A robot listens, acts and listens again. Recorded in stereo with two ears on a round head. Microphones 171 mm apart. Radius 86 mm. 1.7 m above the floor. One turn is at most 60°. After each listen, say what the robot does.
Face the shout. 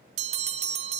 Keep listening.
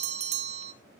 Keep listening.
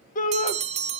Turn 45° left.
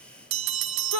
Turn 60° left.
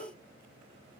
Turn 30° left.
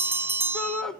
Facing the shout, 1 to 2 m away.